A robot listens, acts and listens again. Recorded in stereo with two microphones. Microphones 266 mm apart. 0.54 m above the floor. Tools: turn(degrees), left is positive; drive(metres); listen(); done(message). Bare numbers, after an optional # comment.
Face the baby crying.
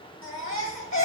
# The baby crying: about 50° left or 130° left.
turn(50)
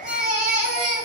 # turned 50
done("Found it: a baby crying, straight ahead.")